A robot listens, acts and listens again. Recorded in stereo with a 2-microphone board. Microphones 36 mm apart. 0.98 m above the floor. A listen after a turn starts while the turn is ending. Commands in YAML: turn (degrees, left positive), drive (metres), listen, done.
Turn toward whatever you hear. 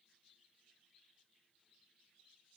listen: true
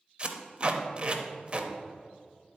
turn: -30
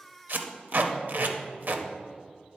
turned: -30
turn: -120
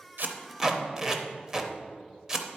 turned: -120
turn: -20
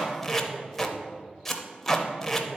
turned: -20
done: "Found it: tape being pulled, straight ahead."